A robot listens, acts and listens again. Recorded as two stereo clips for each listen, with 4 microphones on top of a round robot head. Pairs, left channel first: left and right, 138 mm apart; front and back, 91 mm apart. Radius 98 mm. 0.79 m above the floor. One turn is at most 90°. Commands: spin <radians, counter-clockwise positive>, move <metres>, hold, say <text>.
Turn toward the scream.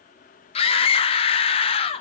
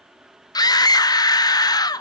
spin 0.70
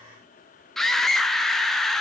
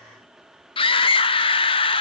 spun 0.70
say Facing the scream, under 1 m away.